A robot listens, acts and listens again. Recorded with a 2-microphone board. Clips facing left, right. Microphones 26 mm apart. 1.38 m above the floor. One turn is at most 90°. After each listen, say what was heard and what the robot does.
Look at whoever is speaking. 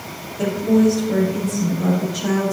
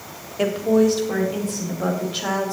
Turn 90° right.
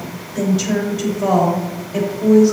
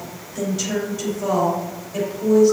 So it is at 10° left. Turn 10° left.
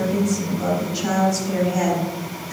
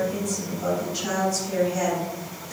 Facing the woman speaking.